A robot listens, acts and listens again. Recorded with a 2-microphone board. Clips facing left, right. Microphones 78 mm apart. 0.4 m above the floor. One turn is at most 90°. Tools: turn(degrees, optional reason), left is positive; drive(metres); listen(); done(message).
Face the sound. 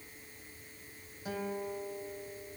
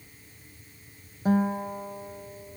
turn(degrees=-40, reason="The guitar: about 40° right or 140° right.")
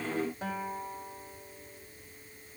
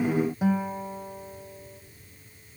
turn(degrees=-10, reason="So it is at 10° right.")
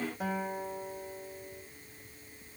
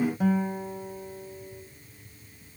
done("Facing the guitar, 1 to 2 m away.")